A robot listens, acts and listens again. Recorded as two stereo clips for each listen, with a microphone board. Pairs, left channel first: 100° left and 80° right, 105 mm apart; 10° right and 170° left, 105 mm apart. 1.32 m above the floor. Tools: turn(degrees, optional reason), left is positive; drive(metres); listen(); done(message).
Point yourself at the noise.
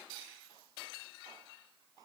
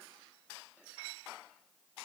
listen()
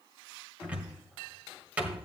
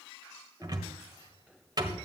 turn(degrees=-150, reason="The cupboard door: 150° right.")
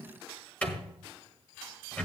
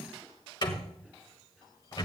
turn(degrees=25, reason="The cupboard door is now 25° left.")
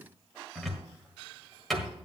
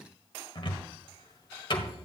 turn(degrees=15, reason="The cupboard door is now 15° left.")
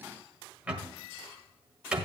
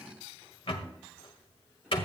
done("Found it: a cupboard door, straight ahead.")